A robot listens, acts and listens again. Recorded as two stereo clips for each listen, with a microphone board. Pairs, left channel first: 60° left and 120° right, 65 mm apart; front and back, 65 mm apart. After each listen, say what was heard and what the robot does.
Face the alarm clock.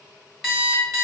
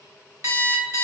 The alarm clock: 140° left. Turn 140° left.
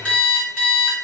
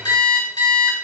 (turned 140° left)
The alarm clock is now 10° right. Turn 10° right.
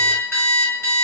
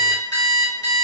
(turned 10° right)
Found it: an alarm clock, straight ahead.